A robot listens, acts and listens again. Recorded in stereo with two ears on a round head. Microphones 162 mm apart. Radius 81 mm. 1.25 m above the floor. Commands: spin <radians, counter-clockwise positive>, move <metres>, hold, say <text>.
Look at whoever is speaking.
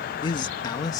spin 0.35
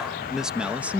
spin -0.17
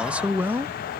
spin -0.26
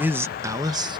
spin -0.35
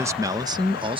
spin -0.52
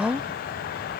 spin -0.17
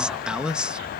say Found it: a man speaking, straight ahead.